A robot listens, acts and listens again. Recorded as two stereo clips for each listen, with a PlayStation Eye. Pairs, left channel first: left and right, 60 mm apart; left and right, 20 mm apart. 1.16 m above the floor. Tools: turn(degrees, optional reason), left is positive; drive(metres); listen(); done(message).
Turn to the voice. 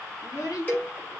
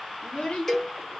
turn(degrees=65, reason="The child speaking: about 65° left or 115° left.")
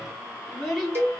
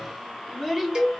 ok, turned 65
done("Facing the child speaking.")